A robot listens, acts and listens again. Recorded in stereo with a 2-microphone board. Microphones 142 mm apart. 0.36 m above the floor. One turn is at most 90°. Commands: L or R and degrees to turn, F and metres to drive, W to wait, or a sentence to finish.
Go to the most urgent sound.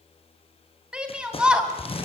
R30
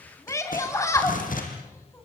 L25
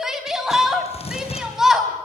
F1.0
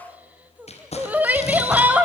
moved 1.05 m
R15
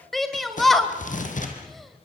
F1.0
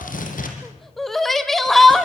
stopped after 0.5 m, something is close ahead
Arrived at the shout, straight ahead.